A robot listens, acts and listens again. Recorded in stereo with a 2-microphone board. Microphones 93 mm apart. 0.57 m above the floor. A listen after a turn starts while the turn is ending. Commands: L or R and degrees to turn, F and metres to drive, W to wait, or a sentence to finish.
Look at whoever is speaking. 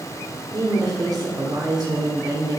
R45
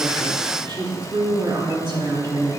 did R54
R70
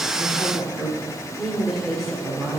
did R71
Found it: a woman speaking, straight ahead, 1 to 2 m away.